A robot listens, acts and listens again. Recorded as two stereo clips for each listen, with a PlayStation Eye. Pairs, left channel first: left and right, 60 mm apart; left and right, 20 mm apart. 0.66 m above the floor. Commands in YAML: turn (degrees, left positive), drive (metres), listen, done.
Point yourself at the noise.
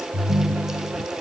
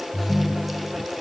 turn: -35
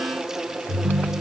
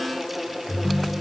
turn: -110
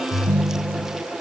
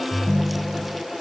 turn: -40
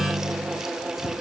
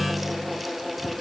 turn: 15
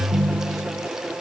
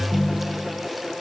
done: "Facing the ringtone."